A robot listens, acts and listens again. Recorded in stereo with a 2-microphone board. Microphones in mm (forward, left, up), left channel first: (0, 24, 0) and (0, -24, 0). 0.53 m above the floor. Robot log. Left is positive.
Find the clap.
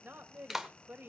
cmd yaw -30
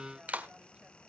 note: So it is at 145° right.
cmd yaw -145
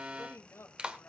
note: The clap is now 25° right.
cmd yaw -25
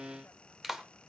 note: The clap is now 10° right.
cmd yaw -10
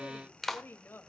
end: Found it: a clap, straight ahead, 1 to 2 m away.